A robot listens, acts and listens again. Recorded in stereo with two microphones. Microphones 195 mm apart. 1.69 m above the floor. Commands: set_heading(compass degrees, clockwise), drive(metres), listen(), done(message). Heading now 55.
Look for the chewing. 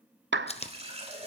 set_heading(20)
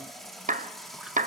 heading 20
listen()
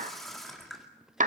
listen()
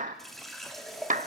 done("I heard chewing, but can't make it out now. It was about straight ahead or 110° left.")